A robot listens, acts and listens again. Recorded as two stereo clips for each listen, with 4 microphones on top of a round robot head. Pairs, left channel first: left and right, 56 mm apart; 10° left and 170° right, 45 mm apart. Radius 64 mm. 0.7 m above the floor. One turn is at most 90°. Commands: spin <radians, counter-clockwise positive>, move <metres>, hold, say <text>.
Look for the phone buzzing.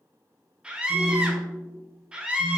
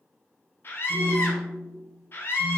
spin -1.57
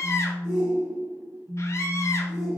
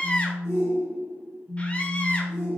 spin -1.40
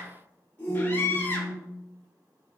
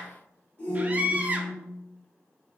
spin -0.17
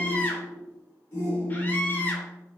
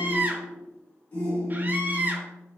say Found it: a phone buzzing, straight ahead, 1 to 2 m away.